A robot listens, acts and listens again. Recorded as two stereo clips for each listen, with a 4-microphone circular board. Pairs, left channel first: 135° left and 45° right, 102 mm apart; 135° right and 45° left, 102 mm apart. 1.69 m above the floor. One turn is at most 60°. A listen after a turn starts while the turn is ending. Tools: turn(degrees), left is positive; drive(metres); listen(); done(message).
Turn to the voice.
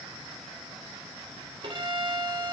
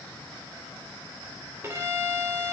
listen()
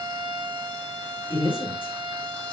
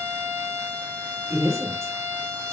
turn(degrees=60)
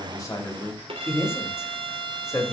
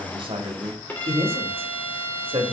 turn(degrees=60)
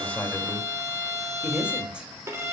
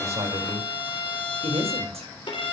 turn(degrees=35)
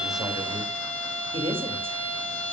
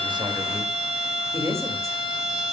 turn(degrees=-20)
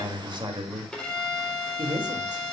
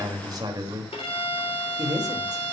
done("Found it: a man speaking, straight ahead, 2 to 4 m away.")